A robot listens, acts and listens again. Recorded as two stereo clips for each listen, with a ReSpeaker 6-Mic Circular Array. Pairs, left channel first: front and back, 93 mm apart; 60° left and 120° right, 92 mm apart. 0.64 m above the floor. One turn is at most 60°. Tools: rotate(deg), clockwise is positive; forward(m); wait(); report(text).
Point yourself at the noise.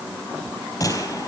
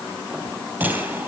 rotate(55)
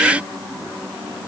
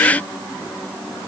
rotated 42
rotate(10)
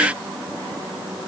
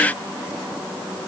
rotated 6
report("Facing where the gunshot came from. I can't hear it now.")